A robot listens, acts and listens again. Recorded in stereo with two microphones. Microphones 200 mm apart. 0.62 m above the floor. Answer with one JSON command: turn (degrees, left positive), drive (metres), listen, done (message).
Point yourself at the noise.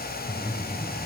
{"turn": 20}
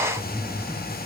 {"done": "Found it: breathing, straight ahead."}